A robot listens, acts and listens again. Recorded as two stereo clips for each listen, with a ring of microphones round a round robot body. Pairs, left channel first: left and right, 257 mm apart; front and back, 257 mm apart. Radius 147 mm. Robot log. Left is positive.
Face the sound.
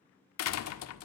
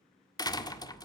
note: The door slam: 75° left.
cmd yaw +75
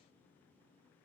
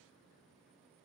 end: I heard a door slam from this way, but can't make it out now.